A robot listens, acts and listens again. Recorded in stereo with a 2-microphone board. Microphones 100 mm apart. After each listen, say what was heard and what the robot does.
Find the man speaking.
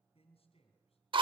The man speaking: about 75° left or 105° left. Turn 75° left.
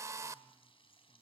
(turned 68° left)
Keep listening.
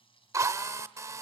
Keep listening.
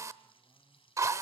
I heard a man speaking, but can't make it out now. It was about 5° left or 40° left.